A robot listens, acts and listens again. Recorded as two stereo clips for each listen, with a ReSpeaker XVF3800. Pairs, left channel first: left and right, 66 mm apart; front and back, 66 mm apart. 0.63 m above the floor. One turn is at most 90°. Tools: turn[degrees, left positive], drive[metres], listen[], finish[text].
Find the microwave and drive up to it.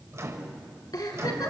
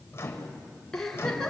Thought: The microwave: 50° right.
Action: turn[-50]
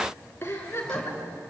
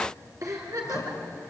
Action: listen[]
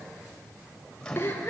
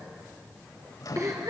Thought: The microwave is now 15° left.
Action: turn[15]
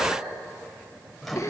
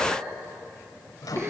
Action: drive[1.0]
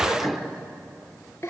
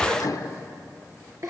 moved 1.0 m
Action: drive[1.0]
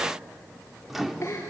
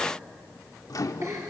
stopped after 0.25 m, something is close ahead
Action: finish[I am next to the microwave.]